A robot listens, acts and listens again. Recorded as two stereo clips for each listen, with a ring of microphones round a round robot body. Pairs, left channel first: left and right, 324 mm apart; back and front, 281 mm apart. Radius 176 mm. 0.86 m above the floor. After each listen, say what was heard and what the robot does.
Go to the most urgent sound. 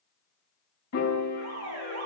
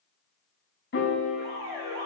The alarm: 45° right. Turn 45° right.
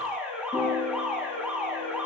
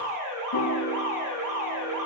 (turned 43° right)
Drive 1.0 m forward.
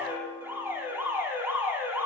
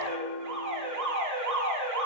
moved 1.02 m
Drive 1.0 m forward.
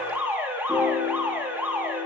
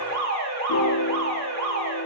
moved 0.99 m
Drive 1.0 m forward.
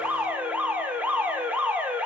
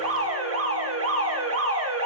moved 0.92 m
Drive 1.0 m forward.
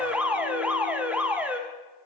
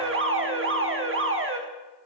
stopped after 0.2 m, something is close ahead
I am next to the alarm.